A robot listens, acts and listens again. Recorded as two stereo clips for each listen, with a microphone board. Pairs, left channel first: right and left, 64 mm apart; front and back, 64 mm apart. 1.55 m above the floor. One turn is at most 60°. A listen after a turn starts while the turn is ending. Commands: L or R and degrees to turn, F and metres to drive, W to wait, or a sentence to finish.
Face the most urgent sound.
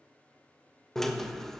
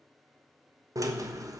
W
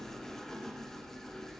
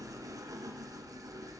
W
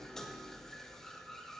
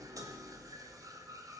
I can't make out anything urgent to turn to.